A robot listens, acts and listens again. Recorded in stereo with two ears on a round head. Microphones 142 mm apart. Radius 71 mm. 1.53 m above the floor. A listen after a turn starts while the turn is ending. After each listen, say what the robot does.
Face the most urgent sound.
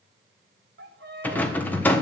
Keep listening.
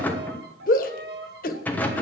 Turn 60° left.
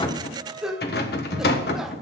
Facing the shout, 1 to 2 m away.